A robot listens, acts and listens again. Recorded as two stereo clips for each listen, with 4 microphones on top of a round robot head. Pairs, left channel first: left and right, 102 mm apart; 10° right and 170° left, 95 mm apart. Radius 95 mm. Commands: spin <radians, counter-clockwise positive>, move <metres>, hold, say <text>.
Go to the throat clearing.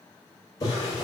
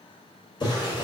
hold
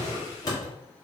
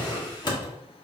hold
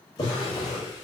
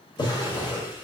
say I can't make out throat clearing, only a drawer.